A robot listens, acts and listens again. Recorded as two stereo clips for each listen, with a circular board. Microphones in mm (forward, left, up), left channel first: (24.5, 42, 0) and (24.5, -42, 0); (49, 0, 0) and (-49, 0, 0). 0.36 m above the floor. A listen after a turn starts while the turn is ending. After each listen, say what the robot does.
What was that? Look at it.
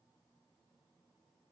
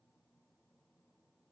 Keep listening.
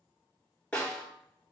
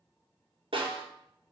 Turn 165° left.
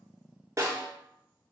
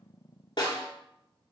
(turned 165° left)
Turn 35° right.
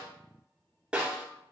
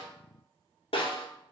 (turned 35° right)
Turn 10° right.
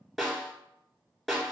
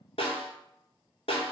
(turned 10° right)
Found it: a snare drum, straight ahead.